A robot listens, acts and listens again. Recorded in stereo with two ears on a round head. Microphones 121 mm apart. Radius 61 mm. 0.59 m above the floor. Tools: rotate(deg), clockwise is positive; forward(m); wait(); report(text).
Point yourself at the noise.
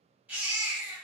rotate(30)
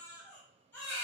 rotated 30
rotate(-15)
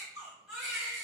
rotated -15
report("Found it: a baby crying, straight ahead.")